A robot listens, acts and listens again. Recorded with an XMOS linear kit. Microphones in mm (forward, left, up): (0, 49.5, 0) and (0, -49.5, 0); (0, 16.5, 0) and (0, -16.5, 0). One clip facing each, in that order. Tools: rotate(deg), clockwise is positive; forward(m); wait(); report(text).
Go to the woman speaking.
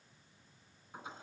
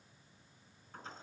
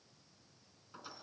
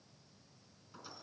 wait()
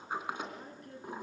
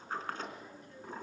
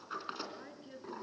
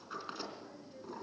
rotate(-55)
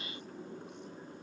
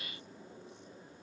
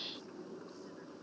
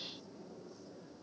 wait()
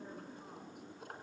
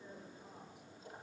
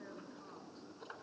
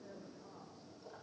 wait()
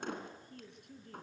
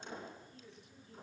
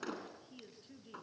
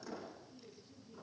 rotate(-65)
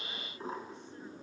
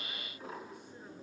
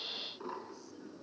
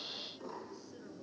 wait()
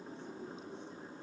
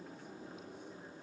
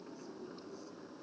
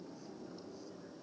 wait()
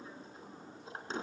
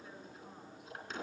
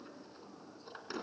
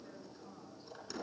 report("Facing where the woman speaking came from. I can't hear it now. I did not reach it.")